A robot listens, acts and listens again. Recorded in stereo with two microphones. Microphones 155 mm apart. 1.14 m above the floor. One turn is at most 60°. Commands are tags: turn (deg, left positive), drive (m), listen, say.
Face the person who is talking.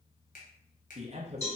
<turn deg="-45"/>
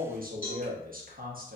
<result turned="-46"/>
<turn deg="-60"/>
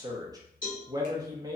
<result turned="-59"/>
<turn deg="-25"/>
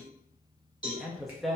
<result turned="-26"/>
<say>Found it: a man speaking, straight ahead, under 1 m away.</say>